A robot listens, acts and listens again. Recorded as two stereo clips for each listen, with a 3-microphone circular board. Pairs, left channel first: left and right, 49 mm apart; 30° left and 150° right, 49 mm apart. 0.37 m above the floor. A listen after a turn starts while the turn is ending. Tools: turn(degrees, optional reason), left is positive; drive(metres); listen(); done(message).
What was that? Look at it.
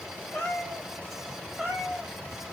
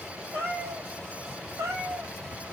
turn(degrees=-170, reason="The cat meowing: 170° right.")
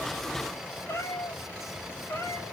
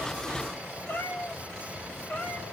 turn(degrees=85, reason="The cat meowing is now 85° left.")
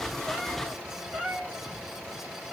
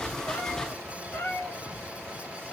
turn(degrees=-20, reason="The cat meowing is now 20° right.")
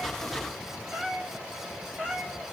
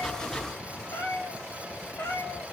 done("Found it: a cat meowing, straight ahead, 2 to 4 m away.")